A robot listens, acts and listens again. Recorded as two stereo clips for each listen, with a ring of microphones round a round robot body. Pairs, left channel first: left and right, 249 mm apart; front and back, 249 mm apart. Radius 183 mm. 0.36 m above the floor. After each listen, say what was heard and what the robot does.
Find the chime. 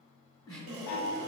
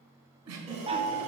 The chime: 110° left. Turn 110° left.
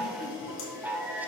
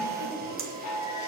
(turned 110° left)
Found it: a chime, straight ahead.